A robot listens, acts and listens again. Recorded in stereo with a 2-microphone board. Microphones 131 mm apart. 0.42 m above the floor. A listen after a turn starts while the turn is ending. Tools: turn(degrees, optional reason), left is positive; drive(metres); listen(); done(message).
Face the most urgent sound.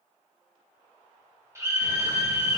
turn(degrees=-20, reason="The scream: about 20° right or 160° right.")
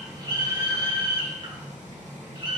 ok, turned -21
turn(degrees=-135, reason="So it is at 135° right.")
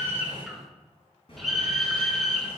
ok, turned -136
done("Facing the scream, 1 to 2 m away.")